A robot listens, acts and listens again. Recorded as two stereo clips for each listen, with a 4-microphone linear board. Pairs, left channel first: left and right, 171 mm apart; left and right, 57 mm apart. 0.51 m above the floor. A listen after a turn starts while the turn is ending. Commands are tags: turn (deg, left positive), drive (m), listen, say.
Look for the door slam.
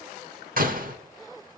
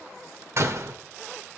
<turn deg="-55"/>
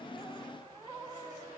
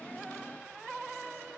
<listen/>
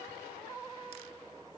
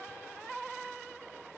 <say>I heard a door slam, but can't make it out now. It was about straight ahead or 70° right.</say>